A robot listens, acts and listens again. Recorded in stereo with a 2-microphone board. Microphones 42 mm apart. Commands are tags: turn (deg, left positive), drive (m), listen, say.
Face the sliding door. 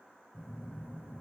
<listen/>
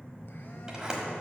<turn deg="-20"/>
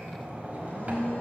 <turn deg="-140"/>
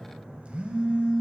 <listen/>
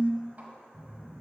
<listen/>
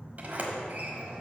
<turn deg="-50"/>
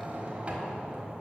<turn deg="-35"/>
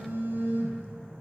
<listen/>
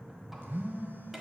<listen/>
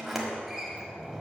<say>Facing the sliding door, 1 to 2 m away.</say>